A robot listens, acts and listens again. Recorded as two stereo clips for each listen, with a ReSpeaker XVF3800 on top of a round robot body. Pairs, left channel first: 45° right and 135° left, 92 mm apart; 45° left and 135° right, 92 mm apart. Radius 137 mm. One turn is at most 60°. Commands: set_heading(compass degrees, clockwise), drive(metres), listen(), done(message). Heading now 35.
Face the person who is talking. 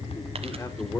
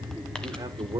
set_heading(95)
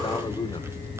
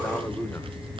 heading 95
set_heading(115)
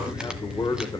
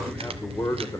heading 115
done("Facing the man speaking.")